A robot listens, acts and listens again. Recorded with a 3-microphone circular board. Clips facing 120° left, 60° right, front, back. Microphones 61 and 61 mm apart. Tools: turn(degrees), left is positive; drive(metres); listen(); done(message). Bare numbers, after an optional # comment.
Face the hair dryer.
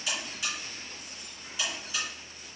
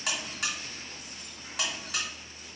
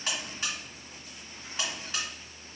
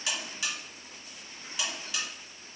listen()
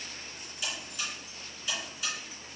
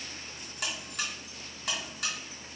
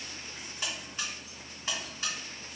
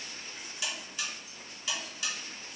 listen()
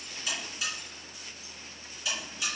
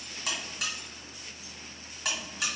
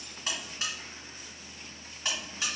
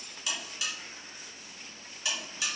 done("I can't make out a hair dryer, only a buzzer.")